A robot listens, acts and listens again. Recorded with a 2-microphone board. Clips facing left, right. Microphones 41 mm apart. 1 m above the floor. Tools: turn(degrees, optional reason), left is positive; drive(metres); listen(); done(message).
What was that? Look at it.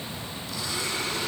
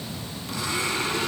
turn(degrees=-60, reason="The blender: about 60° right or 120° right.")
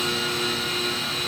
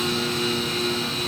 done("Found it: a blender, straight ahead, over 4 m away.")